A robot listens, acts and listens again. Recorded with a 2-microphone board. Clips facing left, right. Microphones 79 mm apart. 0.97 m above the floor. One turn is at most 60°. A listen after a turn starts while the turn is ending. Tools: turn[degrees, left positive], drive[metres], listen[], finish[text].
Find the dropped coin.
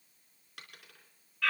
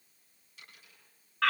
Thought: The dropped coin: about 70° left or 110° left.
Action: turn[60]
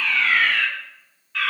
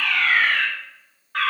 Action: listen[]
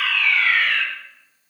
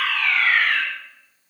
Action: finish[I heard a dropped coin, but can't make it out now. It was about 10° left or 50° left.]